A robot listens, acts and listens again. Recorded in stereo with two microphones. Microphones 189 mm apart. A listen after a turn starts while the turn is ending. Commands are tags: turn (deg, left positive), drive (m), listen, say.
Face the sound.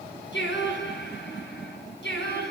<turn deg="65"/>
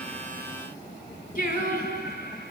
<turn deg="55"/>
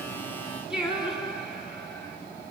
<say>Facing the singing, over 4 m away.</say>